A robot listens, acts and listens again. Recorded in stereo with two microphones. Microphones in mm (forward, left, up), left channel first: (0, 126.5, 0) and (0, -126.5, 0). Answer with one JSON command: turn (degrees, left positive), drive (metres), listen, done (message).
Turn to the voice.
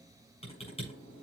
{"listen": true}
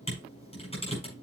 {"listen": true}
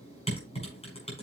{"done": "I can't make out anyone speaking to turn to."}